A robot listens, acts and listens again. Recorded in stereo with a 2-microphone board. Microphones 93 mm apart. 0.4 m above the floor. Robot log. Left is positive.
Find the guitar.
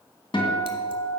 note: The guitar: about 65° left or 115° left.
cmd yaw +65
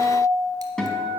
end: Facing the guitar.